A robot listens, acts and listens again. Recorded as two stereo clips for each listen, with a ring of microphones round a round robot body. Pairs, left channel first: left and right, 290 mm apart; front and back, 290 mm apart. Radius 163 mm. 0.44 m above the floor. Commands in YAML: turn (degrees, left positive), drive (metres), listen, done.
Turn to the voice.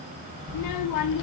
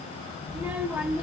turn: 95
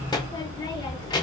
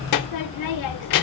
turn: 15
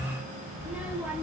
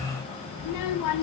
done: "Facing the child speaking, under 1 m away."